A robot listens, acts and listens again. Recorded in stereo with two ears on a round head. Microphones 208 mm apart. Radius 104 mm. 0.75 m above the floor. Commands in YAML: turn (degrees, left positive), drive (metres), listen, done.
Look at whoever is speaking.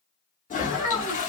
turn: 90
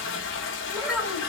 done: "Found it: a child speaking, straight ahead."